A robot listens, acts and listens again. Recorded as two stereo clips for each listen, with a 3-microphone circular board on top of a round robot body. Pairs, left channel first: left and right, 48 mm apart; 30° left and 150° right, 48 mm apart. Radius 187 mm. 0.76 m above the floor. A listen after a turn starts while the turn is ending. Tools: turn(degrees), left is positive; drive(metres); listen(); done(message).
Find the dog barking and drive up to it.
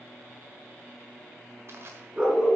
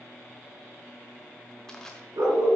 turn(degrees=-160)
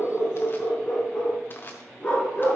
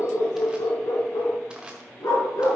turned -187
turn(degrees=25)
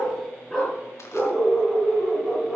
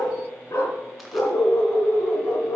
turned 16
turn(degrees=10)
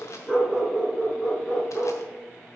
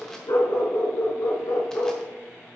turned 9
drive(metres=1.0)
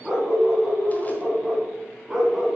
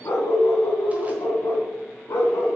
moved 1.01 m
drive(metres=1.0)
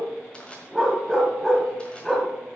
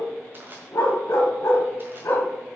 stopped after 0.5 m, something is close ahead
done("Arrived at the dog barking, straight ahead.")